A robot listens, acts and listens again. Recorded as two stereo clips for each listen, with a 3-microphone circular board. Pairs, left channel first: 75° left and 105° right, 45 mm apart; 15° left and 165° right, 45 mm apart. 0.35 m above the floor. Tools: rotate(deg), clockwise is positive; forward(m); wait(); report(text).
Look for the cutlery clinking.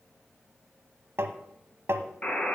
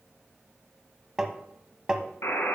wait()
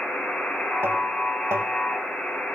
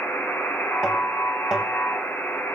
wait()
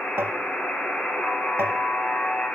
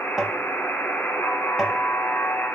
report("I can't make out cutlery clinking, only tapping and a buzzer.")